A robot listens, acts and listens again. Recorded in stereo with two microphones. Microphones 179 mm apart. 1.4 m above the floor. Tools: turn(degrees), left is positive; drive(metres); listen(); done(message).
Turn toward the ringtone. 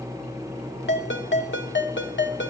turn(degrees=90)
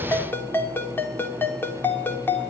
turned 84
turn(degrees=10)
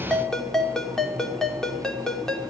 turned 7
done("Found it: a ringtone, straight ahead, 2 to 4 m away.")